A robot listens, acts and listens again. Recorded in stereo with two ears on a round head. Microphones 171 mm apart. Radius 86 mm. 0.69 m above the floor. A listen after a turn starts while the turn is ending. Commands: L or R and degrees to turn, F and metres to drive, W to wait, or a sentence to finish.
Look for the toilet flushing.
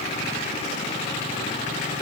W
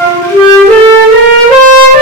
W
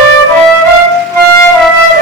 I can't make out a toilet flushing to turn to.